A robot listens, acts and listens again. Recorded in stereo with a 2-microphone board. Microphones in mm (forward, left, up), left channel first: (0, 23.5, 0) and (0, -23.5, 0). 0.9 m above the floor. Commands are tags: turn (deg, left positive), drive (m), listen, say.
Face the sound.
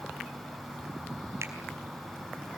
<listen/>
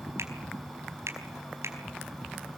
<turn deg="-90"/>
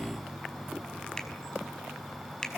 <turn deg="15"/>
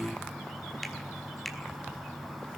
<say>Facing the finger snap, over 4 m away.</say>